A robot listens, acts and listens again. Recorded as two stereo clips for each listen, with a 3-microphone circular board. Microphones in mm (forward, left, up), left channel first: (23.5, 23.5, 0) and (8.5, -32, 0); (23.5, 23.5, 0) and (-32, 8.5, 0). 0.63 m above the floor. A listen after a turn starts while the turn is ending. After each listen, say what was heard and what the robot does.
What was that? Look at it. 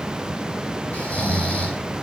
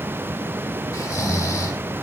The snoring: 10° left. Turn 10° left.
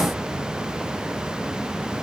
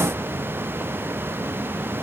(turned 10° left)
Keep listening.
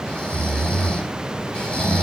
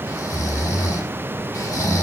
Facing the snoring.